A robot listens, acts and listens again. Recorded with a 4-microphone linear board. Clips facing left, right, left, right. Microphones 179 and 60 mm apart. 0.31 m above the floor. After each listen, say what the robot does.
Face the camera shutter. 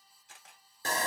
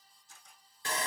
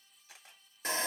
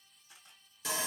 Turn 90° left.
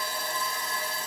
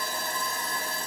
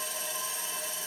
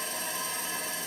Keep listening.
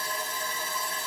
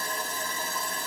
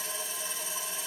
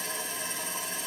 Keep listening.
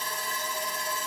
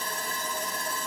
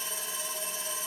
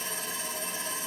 I heard a camera shutter from this way, but can't make it out now.